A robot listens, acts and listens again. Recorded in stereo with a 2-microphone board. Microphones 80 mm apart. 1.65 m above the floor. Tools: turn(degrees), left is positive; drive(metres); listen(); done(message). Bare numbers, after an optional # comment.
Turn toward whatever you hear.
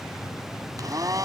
# The blender: about 45° right or 135° right.
turn(-45)
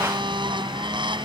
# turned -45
# So it is at 85° right.
turn(-85)
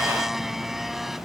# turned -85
done("Found it: a blender, straight ahead.")